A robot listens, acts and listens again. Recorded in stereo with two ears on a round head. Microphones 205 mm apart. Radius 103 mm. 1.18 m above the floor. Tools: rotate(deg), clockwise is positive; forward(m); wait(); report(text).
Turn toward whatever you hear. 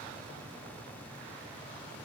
wait()
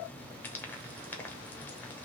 rotate(-30)
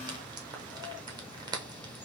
rotate(20)
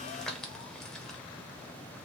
report("Found it: frying, straight ahead.")